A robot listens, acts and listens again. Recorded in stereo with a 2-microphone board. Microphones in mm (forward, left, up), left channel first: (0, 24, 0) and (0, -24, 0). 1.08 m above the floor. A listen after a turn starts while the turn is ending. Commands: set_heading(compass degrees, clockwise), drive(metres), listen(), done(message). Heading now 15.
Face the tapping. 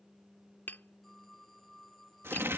set_heading(330)
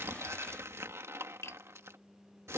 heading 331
set_heading(241)
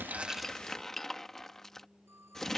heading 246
done("Facing the tapping.")